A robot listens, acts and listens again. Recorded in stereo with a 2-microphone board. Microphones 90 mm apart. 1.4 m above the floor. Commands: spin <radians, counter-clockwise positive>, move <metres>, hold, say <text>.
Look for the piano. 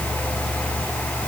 hold
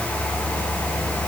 hold
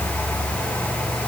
say I can't make out a piano.